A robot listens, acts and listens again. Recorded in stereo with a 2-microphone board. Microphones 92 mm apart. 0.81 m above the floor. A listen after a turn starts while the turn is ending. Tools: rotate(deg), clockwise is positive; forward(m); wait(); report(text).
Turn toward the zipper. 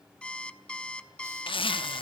rotate(-65)
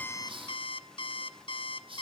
wait()
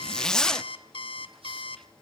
report("Facing the zipper, under 1 m away.")